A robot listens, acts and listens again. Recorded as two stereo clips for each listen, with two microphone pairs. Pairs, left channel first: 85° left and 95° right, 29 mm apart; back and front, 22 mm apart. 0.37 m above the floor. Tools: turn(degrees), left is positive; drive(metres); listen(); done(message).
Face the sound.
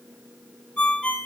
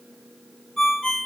turn(degrees=120)
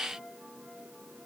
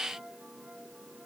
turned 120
listen()
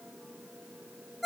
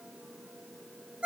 done("Facing the ringtone, 1 to 2 m away.")